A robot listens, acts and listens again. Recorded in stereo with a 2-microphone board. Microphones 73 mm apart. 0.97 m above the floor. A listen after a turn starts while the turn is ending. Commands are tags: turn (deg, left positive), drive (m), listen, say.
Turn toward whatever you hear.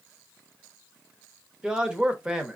<turn deg="-30"/>
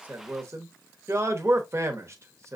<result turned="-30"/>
<turn deg="-135"/>
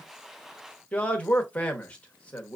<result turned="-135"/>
<turn deg="20"/>
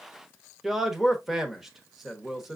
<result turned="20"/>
<say>Facing the man speaking.</say>